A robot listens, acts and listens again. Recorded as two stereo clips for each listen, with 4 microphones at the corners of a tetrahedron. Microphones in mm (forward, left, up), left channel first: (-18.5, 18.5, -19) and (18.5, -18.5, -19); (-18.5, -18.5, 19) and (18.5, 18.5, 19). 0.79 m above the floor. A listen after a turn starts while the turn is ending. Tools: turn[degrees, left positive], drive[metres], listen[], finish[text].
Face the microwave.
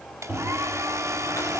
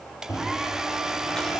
Thought: The microwave: 110° right.
Action: turn[-110]
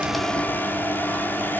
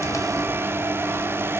Action: finish[Facing the microwave, over 4 m away.]